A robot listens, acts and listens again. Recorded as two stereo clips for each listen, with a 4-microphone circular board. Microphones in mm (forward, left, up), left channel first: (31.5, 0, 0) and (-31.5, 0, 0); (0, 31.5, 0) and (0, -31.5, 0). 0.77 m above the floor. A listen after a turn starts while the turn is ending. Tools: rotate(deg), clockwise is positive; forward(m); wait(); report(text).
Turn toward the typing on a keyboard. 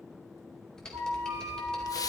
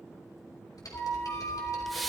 rotate(-80)
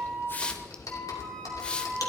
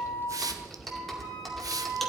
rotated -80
report("Found it: typing on a keyboard, straight ahead.")